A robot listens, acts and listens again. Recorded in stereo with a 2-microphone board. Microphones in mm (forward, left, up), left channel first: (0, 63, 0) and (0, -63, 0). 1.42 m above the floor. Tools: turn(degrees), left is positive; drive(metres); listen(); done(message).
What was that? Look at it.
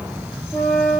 turn(degrees=30)
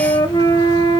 turn(degrees=140)
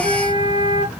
turn(degrees=-45)
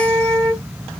done("Facing the flute.")